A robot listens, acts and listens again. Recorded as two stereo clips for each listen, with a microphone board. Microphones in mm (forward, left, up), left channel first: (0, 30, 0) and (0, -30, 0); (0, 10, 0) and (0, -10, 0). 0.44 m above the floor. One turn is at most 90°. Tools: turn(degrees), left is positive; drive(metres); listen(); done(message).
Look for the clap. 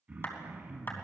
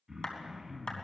turn(degrees=35)
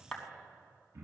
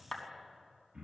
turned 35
done("Facing the clap, 2 to 4 m away.")